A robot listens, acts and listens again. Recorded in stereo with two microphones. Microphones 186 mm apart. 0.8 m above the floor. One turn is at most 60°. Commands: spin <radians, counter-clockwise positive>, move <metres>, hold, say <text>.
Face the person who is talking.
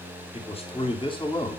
spin 0.44
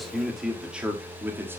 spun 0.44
spin -0.17
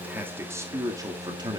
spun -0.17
spin -0.44
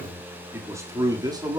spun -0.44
spin -0.44
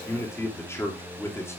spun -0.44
spin 0.26
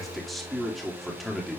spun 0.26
say Facing the man speaking.